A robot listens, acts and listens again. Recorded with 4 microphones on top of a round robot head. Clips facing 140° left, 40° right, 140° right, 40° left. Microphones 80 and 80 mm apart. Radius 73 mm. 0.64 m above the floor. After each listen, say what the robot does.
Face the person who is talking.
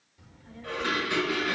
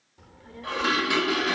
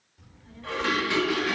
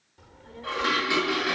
Facing the child speaking, 1 to 2 m away.